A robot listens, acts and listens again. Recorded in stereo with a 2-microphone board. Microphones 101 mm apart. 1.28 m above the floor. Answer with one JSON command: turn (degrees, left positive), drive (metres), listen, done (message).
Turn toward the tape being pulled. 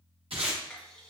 {"turn": -70}
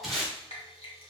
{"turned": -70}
{"done": "Found it: tape being pulled, straight ahead."}